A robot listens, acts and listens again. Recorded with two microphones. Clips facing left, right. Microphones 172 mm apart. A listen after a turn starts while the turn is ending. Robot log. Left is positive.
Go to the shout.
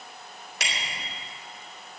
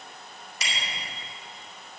cmd idle
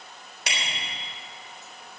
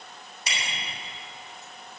cmd idle
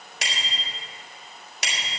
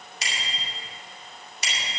end: I can't make out a shout to turn to.